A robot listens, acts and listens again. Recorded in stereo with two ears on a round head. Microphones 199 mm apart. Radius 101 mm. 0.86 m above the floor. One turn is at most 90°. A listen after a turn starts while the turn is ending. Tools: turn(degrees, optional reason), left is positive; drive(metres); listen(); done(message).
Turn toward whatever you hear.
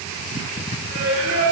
turn(degrees=-75, reason="The singing: about 75° right or 105° right.")
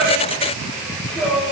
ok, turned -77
done("Found it: singing, straight ahead.")